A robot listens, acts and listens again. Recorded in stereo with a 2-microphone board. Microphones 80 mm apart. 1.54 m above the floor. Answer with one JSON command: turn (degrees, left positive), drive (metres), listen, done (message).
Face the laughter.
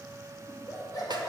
{"turn": 55}
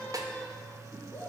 {"turn": 35}
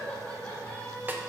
{"turn": 25}
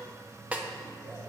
{"listen": true}
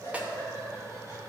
{"turn": 35}
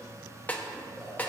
{"listen": true}
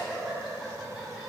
{"done": "Facing the laughter."}